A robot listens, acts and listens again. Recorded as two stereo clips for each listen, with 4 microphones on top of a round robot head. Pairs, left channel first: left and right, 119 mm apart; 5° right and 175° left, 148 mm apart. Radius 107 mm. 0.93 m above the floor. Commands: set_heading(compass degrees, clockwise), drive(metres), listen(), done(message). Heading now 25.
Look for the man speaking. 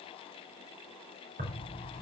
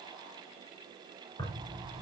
listen()
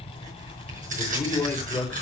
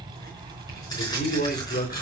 set_heading(15)
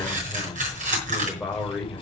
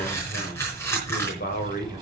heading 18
done("Found it: a man speaking, straight ahead.")